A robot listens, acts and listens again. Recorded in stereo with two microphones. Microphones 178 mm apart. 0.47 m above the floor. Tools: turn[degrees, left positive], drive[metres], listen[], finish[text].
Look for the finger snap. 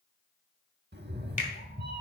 Thought: The finger snap: about 45° left or 135° left.
Action: turn[45]
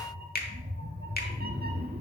Thought: So it is at 85° left.
Action: turn[85]
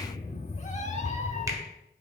Action: listen[]
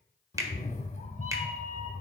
Thought: The finger snap is now 20° right.
Action: turn[-20]
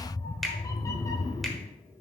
Action: finish[Facing the finger snap, 1 to 2 m away.]